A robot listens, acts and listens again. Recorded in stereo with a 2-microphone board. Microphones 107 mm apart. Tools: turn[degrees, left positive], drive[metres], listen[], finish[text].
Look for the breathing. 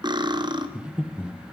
Action: turn[-30]
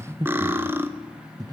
Thought: So it is at 140° right.
Action: turn[-140]
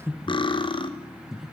Action: finish[Found it: breathing, straight ahead, under 1 m away.]